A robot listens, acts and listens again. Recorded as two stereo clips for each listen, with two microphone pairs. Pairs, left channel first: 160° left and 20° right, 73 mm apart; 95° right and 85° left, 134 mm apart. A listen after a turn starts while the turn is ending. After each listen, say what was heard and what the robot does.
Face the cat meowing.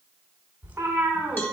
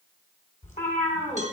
The cat meowing: 85° right. Turn 85° right.
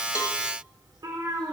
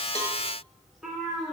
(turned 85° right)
Facing the cat meowing, 2 to 4 m away.